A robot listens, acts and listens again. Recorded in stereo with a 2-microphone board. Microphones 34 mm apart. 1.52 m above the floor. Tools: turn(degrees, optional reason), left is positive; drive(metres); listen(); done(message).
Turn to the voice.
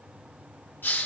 listen()
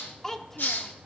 turn(degrees=15, reason="The child speaking: about 15° left or 165° left.")
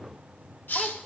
listen()
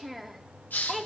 done("Found it: a child speaking, straight ahead.")